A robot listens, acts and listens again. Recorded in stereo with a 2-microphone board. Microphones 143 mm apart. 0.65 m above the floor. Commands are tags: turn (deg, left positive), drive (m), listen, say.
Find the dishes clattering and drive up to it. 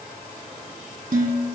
<turn deg="-70"/>
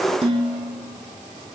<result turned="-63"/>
<turn deg="-45"/>
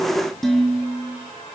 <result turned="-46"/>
<drive m="1.0"/>
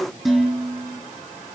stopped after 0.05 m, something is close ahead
<say>Blocked. The dishes clattering is further on, straight ahead.</say>